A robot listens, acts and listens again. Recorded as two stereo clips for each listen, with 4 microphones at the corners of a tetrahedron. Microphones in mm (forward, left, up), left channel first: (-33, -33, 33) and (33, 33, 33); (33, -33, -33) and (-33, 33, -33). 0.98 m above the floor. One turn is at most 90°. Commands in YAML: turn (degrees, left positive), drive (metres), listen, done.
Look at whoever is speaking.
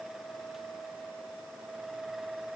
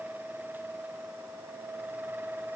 listen: true
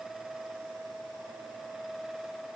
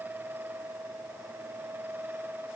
listen: true
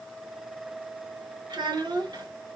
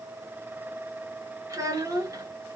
turn: 85
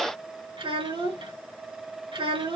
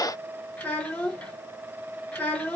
turn: 35
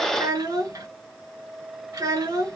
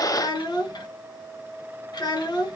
done: "Found it: a child speaking, straight ahead."